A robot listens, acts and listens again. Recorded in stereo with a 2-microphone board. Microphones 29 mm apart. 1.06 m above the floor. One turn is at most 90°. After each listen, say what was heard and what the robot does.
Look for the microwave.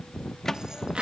Turn 30° left.
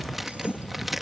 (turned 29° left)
Keep listening.
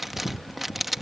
Keep listening.
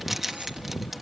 I heard a microwave, but can't make it out now. It was about 15° right or 135° left.